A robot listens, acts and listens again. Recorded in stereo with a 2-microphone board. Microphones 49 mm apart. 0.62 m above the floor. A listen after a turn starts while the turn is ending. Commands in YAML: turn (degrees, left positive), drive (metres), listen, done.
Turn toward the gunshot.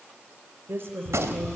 turn: -90
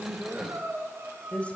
done: "Facing where the gunshot came from. I can't hear it now."